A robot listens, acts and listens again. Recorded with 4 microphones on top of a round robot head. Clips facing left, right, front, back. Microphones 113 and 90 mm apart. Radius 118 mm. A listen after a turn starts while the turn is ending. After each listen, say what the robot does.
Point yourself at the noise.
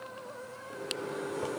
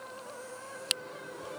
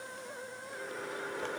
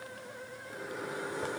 Turn 100° left.
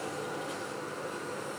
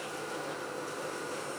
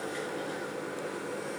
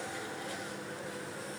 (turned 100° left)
Found it: a microwave, straight ahead.